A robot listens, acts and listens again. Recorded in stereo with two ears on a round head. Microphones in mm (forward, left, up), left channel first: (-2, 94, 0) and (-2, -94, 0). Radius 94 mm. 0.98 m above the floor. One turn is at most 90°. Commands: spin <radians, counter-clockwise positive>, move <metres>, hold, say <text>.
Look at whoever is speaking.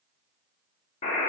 hold
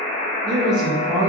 spin -0.35
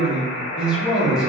say Found it: a man speaking, straight ahead, 1 to 2 m away.